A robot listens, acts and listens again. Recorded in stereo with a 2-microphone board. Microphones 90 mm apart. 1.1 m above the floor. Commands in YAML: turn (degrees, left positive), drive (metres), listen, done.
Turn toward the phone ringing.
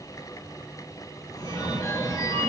turn: 40
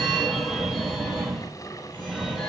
done: "Found it: a phone ringing, straight ahead."